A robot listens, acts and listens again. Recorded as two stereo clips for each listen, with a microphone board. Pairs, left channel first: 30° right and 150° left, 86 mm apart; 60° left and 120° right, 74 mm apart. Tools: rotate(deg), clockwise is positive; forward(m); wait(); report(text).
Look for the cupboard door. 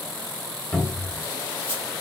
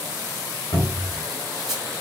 rotate(-50)
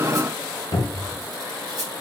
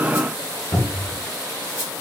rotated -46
report("Found it: a cupboard door, straight ahead, under 1 m away.")